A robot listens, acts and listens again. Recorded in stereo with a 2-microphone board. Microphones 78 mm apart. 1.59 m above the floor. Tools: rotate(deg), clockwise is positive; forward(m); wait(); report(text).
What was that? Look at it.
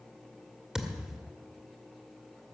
rotate(30)
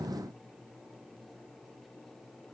wait()
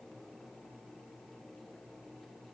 report("I heard a thud, but can't make it out now. It was about 20° left or 140° right.")